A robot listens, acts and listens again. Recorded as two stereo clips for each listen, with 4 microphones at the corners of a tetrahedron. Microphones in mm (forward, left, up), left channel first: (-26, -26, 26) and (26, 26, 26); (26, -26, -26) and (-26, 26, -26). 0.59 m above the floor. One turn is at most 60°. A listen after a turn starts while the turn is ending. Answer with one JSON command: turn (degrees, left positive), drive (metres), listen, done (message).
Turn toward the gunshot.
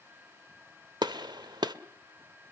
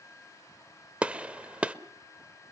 {"turn": 60}
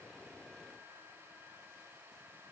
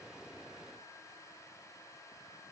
{"done": "Facing where the gunshot came from. I can't hear it now."}